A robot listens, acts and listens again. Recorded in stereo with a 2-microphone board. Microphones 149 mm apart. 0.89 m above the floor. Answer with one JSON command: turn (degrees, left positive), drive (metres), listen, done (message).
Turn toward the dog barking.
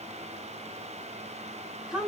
{"listen": true}
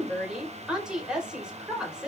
{"listen": true}
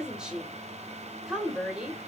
{"done": "I can't make out a dog barking, only a woman speaking."}